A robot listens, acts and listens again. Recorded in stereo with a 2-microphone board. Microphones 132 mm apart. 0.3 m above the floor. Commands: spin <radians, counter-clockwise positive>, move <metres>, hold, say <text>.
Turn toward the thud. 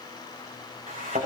spin -1.13
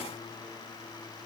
hold
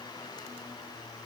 say I heard a thud, but can't make it out now. It was about straight ahead or 50° right.